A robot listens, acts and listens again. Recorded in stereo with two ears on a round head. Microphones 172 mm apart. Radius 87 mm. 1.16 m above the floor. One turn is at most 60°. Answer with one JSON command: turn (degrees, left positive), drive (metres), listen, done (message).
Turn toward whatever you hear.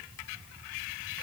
{"listen": true}
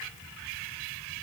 {"listen": true}
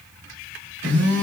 {"turn": -60}
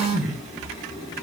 {"turn": -20}
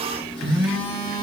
{"done": "Facing the phone buzzing."}